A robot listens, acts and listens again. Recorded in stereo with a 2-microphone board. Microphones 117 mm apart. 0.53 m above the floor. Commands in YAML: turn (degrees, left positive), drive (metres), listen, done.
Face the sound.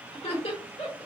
turn: 50
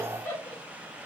turn: 15
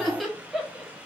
done: "Found it: laughter, straight ahead, 1 to 2 m away."